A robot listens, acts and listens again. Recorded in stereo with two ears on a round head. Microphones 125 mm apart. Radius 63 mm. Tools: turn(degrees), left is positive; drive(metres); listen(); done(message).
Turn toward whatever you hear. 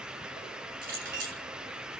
turn(degrees=-75)
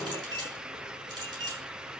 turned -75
turn(degrees=-30)
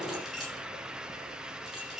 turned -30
done("Found it: a clink, straight ahead, over 4 m away.")